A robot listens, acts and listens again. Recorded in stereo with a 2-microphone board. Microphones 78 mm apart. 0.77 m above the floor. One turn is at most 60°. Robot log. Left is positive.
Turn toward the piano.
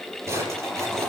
cmd idle
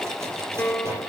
note: The piano: about 25° left or 155° left.
cmd yaw +25
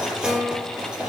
end: Found it: a piano, straight ahead, 1 to 2 m away.